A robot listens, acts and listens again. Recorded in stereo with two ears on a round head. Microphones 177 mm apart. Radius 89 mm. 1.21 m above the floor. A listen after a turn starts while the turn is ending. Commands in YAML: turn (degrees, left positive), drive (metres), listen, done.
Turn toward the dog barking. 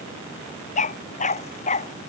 turn: 40
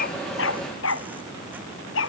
turn: 105
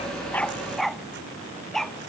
done: "Found it: a dog barking, straight ahead."